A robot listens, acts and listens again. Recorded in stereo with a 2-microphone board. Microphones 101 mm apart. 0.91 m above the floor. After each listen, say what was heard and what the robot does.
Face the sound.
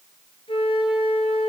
The flute: about 55° left or 125° left. Turn 55° left.
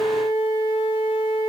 So it is at 75° left. Turn 75° left.
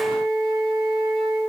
Found it: a flute, straight ahead, over 4 m away.